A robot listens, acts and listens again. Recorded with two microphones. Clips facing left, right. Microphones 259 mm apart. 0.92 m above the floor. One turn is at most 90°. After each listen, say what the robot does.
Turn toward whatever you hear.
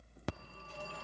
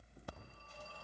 Turn 90° left.
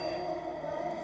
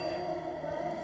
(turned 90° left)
Facing the phone ringing, under 1 m away.